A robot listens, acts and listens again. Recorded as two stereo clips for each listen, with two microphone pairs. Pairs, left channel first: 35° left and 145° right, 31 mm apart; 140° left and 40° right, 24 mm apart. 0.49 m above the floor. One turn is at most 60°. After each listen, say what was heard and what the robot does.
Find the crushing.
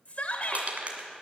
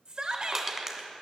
The crushing: 110° right. Turn 60° right.
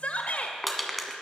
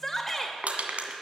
The crushing is now 55° right. Turn 55° right.
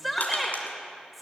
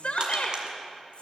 Keep listening.
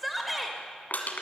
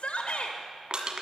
The crushing is now 10° left. Turn 10° left.
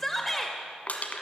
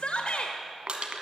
Found it: crushing, straight ahead.